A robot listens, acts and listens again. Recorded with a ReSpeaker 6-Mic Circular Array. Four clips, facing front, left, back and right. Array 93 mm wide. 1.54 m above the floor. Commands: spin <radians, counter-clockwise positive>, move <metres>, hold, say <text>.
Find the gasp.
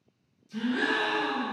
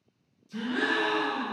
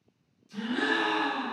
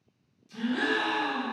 spin 1.31
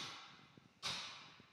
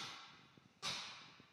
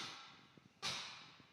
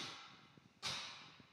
say Facing where the gasp came from. I can't hear it now.